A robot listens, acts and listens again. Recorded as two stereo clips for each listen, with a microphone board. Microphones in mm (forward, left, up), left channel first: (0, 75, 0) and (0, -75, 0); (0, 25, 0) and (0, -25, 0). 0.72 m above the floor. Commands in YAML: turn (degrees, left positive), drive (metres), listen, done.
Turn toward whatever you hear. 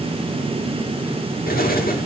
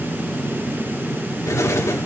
turn: 90
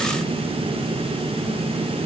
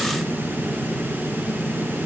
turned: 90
done: "I heard an explosion from this way, but can't make it out now."